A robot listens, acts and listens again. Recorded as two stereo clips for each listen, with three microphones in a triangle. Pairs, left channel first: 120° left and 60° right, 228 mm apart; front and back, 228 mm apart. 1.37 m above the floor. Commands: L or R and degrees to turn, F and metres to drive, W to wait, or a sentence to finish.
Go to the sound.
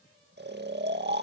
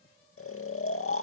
R20
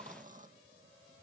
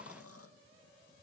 W
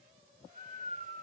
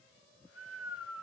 F1.0
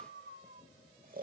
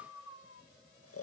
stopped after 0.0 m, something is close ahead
R10
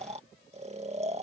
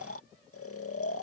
Something is in my way. I am facing the snoring but have not reached it.